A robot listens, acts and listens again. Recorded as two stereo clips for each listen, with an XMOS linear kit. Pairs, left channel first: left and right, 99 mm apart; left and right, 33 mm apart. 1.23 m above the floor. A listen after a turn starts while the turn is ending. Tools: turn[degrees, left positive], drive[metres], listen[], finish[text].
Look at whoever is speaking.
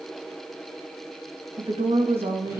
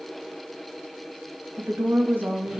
Action: turn[-90]
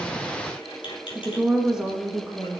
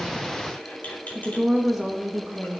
Action: finish[Found it: a woman speaking, straight ahead.]